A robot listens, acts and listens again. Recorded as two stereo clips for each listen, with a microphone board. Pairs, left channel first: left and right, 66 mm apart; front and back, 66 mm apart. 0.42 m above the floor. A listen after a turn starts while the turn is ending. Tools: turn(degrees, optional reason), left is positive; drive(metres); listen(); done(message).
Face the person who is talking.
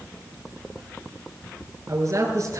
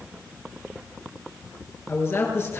turn(degrees=-50, reason="The man speaking: 50° right.")
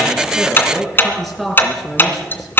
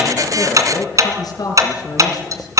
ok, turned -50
done("Facing the man speaking.")